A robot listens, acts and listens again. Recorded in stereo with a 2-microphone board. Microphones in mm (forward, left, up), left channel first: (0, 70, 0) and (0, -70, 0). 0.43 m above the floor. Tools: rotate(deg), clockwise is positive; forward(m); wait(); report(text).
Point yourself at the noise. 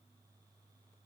wait()
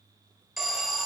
rotate(-30)
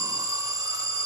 rotate(30)
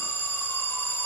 rotate(-20)
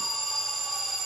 report("Found it: an alarm, straight ahead.")